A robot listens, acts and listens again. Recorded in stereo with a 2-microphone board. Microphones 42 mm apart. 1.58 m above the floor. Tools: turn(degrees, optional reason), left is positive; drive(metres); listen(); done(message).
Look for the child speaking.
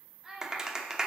turn(degrees=-30)
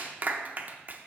listen()
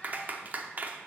listen()
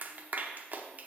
done("I heard a child speaking, but can't make it out now. It was about 20° left or 140° right.")